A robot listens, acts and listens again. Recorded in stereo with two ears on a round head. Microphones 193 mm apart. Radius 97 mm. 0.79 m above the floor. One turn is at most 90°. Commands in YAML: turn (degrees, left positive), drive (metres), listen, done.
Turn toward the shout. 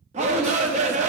turn: -30
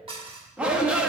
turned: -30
done: "Facing the shout, under 1 m away."